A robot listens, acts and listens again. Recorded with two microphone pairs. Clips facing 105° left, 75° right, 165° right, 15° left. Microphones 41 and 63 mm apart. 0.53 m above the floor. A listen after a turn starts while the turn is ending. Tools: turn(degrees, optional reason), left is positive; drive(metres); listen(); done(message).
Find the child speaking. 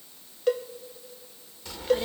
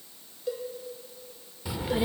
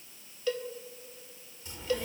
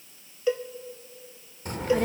done("Found it: a child speaking, straight ahead.")